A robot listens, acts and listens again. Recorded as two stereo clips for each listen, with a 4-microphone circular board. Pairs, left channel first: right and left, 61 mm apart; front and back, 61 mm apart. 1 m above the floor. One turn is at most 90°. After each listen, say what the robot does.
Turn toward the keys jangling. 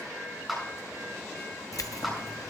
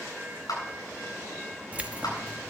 Turn 90° right.
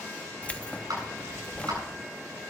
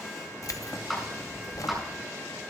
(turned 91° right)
Turn 20° right.
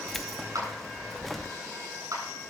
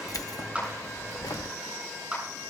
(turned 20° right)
Facing the keys jangling, under 1 m away.